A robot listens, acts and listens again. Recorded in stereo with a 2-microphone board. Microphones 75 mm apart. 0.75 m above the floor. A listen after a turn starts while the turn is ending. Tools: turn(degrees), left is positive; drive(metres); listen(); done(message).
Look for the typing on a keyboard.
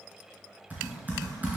turn(degrees=-20)
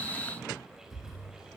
done("Facing the typing on a keyboard, 2 to 4 m away.")